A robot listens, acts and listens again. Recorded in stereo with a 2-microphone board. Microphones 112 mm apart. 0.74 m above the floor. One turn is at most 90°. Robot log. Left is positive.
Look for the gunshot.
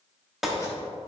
cmd yaw +30
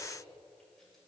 cmd idle
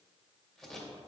end: I heard a gunshot, but can't make it out now. It was about 30° right or 150° left.